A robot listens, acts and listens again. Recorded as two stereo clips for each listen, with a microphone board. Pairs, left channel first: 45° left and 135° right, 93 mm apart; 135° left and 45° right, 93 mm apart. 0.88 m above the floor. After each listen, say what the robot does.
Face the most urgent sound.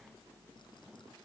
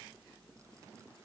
Keep listening.
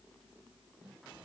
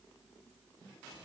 Keep listening.
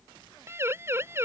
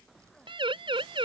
Turn 70° right.
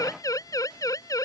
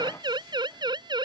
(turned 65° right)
Found it: a siren, straight ahead.